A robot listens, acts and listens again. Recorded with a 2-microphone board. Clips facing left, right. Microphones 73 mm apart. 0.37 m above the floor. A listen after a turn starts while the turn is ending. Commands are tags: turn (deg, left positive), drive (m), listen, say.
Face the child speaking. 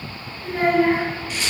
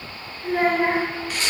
<turn deg="-25"/>
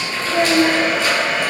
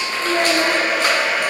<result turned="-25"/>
<turn deg="-130"/>
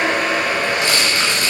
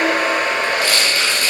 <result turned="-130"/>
<listen/>
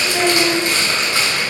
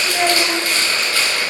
<say>Facing the child speaking.</say>